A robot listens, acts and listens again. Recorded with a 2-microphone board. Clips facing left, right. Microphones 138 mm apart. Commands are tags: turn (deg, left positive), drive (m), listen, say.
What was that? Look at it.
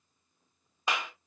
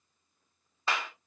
<turn deg="30"/>
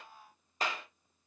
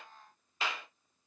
<turn deg="135"/>
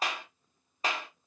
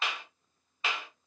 <turn deg="40"/>
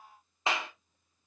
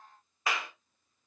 <turn deg="25"/>
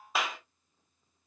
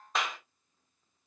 <say>Facing the clap.</say>